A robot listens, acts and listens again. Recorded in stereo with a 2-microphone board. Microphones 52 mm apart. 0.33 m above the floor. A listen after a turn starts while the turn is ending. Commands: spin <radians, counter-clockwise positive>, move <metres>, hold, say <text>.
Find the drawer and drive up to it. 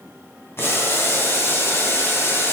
hold
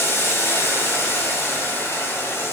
hold
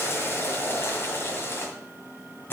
say I can't make out a drawer, only boiling.